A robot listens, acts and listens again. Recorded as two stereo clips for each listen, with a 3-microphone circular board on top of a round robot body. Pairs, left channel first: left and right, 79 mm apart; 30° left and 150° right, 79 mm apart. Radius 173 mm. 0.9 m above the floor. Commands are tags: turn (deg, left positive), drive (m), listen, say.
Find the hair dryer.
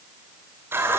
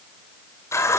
<listen/>
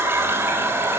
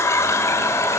<listen/>
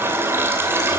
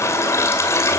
<say>I can't make out a hair dryer, only a running tap.</say>